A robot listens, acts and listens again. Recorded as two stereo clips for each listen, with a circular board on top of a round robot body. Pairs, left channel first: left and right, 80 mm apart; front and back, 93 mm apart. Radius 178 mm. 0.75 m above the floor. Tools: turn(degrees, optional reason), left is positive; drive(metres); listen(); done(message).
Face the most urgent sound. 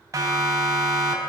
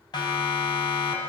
turn(degrees=-40, reason="The siren: 40° right.")
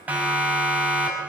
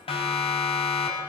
turn(degrees=-20, reason="The siren is now 20° right.")
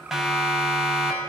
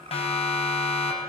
done("Found it: a siren, straight ahead.")